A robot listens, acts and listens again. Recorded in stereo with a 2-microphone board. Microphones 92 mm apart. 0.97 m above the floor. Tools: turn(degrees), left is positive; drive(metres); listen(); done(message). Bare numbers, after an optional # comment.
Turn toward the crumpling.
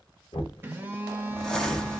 turn(30)
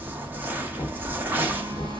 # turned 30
# So it is at 20° right.
turn(-20)
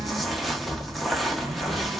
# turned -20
done("Facing the crumpling, under 1 m away.")